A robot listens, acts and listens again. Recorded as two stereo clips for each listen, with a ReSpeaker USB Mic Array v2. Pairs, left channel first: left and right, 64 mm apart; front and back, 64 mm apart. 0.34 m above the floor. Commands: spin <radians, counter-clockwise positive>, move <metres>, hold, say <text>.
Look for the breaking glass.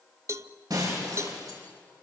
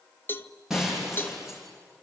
spin -1.66
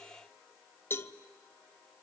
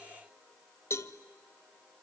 say Facing where the breaking glass came from. I can't hear it now.